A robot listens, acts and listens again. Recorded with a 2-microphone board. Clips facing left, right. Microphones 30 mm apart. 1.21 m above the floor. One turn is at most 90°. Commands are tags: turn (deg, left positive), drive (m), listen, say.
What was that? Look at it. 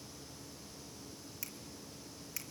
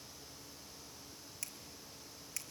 <turn deg="30"/>
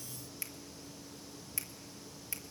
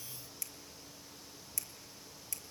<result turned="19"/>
<turn deg="90"/>
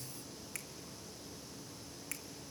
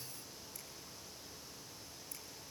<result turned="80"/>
<turn deg="75"/>
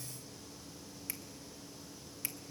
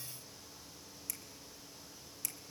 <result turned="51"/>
<turn deg="25"/>
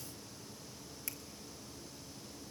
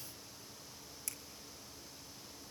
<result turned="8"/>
<turn deg="20"/>
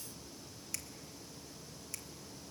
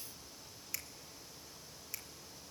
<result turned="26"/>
<say>Facing the finger snap, 1 to 2 m away.</say>